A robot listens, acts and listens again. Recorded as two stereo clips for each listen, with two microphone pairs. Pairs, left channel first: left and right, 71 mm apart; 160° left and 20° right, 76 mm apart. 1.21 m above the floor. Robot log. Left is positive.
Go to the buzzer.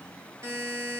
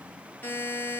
note: The buzzer: 135° right.
cmd yaw -135
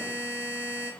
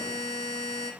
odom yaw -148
note: The buzzer is now 15° left.
cmd yaw +15
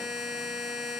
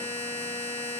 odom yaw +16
cmd fwd 1.0
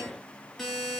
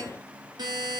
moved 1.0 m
cmd fwd 1.0
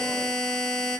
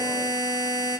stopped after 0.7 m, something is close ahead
end: Arrived at the buzzer, straight ahead.